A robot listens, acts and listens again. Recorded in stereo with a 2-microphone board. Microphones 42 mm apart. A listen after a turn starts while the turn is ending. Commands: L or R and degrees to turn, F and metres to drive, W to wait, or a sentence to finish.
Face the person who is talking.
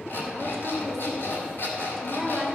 L30
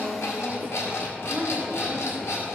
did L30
R25
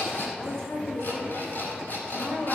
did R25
L10
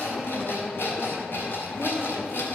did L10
W
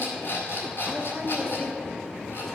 Facing the woman speaking.